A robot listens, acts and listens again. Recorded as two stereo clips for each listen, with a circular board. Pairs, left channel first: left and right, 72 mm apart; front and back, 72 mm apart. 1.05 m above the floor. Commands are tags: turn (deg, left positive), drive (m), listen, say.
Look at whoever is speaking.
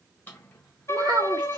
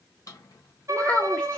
<turn deg="-70"/>
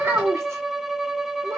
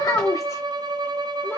<turn deg="-40"/>
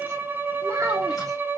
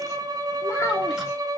<turn deg="-45"/>
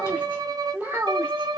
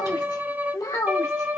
<turn deg="-25"/>
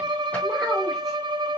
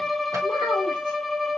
<listen/>
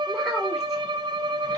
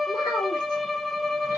<listen/>
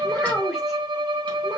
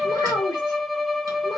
<say>Found it: a child speaking, straight ahead, 2 to 4 m away.</say>